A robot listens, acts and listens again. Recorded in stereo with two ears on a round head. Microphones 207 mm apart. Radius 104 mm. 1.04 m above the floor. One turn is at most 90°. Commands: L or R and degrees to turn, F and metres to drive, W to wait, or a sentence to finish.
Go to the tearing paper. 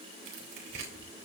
R40
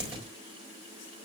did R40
F1.0
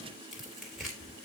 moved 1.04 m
F1.0
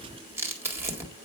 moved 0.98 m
R10
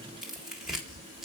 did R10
F1.0
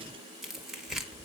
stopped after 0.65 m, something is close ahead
I am next to the tearing paper.